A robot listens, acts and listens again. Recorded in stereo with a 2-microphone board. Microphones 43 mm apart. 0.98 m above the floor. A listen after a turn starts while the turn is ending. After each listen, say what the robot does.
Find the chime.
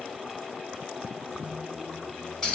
Keep listening.
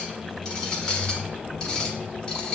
Keep listening.
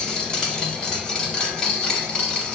I can't make out a chime, only a squeak and a clink.